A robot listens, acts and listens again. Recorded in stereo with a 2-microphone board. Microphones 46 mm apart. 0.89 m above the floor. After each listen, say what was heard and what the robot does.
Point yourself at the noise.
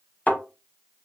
The thud: about 35° left or 145° left. Turn 35° left.
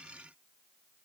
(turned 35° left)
Keep listening.
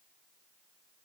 I heard a thud, but can't make it out now. It was about straight ahead or 110° left.